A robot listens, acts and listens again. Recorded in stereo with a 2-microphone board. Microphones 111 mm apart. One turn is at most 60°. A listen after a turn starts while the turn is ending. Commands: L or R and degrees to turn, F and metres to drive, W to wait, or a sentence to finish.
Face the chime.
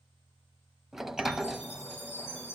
L60
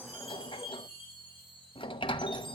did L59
L45
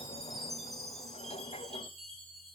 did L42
Facing the chime, over 4 m away.